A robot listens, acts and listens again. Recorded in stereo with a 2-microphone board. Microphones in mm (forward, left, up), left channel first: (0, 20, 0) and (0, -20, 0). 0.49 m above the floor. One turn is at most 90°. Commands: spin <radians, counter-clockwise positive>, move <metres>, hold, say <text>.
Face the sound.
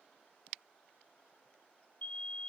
spin 0.70
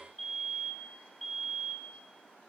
say Found it: a fire alarm, straight ahead.